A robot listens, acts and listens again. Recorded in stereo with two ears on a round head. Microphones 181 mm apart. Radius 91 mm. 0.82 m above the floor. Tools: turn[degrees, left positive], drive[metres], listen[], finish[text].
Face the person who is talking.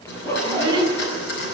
Thought: The child speaking: about 20° right or 160° right.
Action: turn[-20]
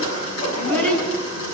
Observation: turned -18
Thought: So it is at 10° left.
Action: turn[10]
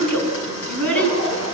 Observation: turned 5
Thought: The child speaking is now 10° left.
Action: turn[10]
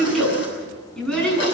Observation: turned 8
Action: finish[Facing the child speaking, over 4 m away.]